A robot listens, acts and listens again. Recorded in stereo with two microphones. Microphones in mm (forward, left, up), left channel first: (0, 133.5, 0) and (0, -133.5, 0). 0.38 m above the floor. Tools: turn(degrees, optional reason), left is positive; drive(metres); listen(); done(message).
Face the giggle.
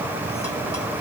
listen()
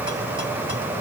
listen()
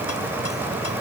done("I can't make out a giggle.")